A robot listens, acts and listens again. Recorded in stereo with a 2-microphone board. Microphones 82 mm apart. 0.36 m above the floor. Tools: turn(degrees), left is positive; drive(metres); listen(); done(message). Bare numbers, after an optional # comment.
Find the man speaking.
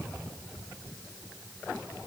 listen()
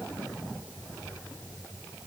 listen()
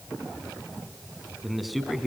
turn(30)
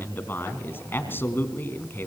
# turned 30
# So it is at 150° left.
turn(150)
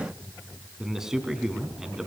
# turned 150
done("Facing the man speaking, 2 to 4 m away.")